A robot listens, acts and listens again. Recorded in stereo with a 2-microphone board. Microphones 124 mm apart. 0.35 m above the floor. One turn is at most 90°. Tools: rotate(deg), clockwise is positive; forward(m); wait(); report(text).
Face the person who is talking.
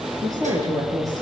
rotate(25)
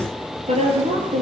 rotate(90)
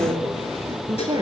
rotate(30)
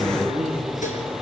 report("Facing the woman speaking.")